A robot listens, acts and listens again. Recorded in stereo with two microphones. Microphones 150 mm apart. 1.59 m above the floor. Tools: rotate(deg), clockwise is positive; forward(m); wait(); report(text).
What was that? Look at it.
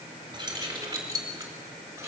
rotate(20)
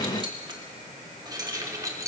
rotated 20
rotate(20)
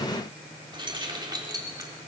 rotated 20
rotate(25)
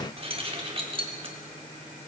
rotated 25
rotate(140)
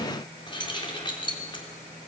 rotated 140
rotate(-35)
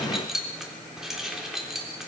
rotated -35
report("Facing the keys jangling, 2 to 4 m away.")